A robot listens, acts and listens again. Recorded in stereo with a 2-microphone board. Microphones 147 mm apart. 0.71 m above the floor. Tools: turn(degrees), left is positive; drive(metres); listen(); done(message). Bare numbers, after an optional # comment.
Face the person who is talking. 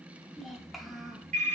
turn(30)
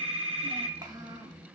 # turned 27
# So it is at 30° right.
turn(-30)
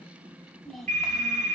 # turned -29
done("Facing the child speaking.")